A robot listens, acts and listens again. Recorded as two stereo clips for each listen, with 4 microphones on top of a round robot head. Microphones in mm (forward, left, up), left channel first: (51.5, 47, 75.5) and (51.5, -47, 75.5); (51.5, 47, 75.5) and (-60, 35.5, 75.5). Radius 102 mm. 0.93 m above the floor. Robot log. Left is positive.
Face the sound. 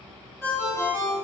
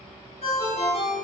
note: The ringtone: 30° left.
cmd yaw +30
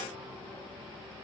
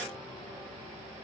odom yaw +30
cmd idle
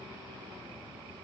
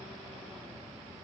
cmd idle
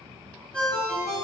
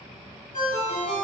note: The ringtone is now 10° left.
cmd yaw +10
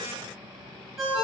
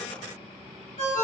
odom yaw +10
end: Found it: a ringtone, straight ahead, 1 to 2 m away.